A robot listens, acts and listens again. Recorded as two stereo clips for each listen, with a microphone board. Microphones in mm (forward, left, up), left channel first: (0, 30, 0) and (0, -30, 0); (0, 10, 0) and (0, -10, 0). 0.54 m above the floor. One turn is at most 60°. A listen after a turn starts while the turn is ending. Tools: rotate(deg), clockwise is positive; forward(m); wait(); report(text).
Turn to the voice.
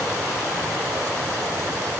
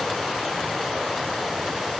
wait()
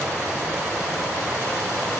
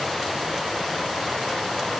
wait()
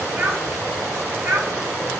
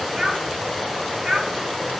rotate(50)
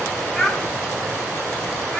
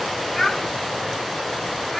report("Facing the child speaking.")